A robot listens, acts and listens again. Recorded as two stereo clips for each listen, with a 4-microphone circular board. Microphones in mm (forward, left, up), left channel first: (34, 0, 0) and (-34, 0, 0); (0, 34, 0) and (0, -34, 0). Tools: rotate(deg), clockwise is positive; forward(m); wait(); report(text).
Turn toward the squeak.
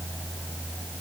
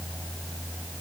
wait()
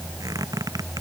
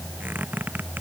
rotate(155)
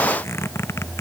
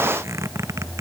rotate(45)
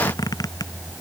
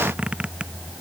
rotate(15)
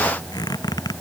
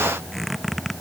report("Facing the squeak.")